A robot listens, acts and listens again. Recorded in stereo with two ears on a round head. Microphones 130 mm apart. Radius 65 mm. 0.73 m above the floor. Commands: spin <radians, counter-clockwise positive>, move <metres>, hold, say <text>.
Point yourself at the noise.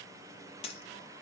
spin 0.70
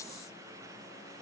hold
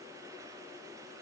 say I heard a dropped coin, but can't make it out now. It was about straight ahead or 100° left.